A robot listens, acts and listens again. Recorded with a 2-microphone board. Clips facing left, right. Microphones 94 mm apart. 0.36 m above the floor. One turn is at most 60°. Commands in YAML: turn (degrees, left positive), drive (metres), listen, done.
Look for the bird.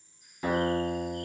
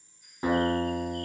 turn: 30
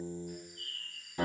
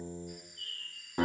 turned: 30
turn: 60
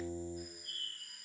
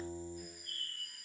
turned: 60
turn: 60
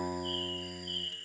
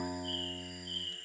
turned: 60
turn: -10
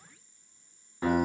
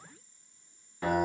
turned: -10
listen: true
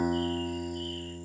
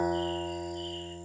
listen: true
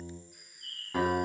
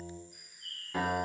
done: "Found it: a bird, straight ahead, 1 to 2 m away."